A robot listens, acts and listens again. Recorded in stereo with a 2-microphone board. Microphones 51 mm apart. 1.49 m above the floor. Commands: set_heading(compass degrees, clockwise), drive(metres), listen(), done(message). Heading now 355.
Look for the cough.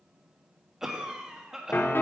set_heading(25)
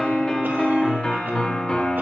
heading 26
listen()
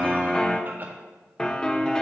listen()
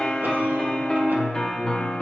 done("I heard a cough, but can't make it out now. It was about 20° left or 140° right.")